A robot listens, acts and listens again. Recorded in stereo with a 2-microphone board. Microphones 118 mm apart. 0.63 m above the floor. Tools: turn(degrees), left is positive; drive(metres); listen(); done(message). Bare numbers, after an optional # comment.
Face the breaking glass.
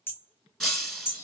turn(30)
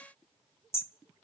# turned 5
listen()
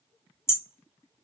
done("I heard breaking glass, but can't make it out now. It was about 5° right or 175° left.")